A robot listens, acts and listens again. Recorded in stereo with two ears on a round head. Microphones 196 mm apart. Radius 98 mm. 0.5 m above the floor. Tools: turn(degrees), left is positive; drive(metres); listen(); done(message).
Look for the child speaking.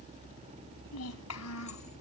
turn(degrees=90)
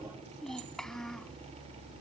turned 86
done("Facing the child speaking.")